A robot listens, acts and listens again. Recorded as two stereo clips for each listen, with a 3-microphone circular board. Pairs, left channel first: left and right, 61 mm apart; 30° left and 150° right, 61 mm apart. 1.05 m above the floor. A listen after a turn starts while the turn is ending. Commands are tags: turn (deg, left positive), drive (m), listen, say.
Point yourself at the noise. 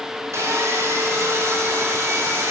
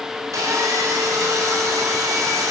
<turn deg="-130"/>
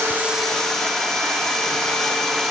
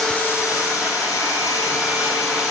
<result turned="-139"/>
<turn deg="10"/>
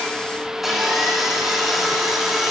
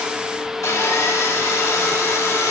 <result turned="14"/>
<say>Facing the sawing, 1 to 2 m away.</say>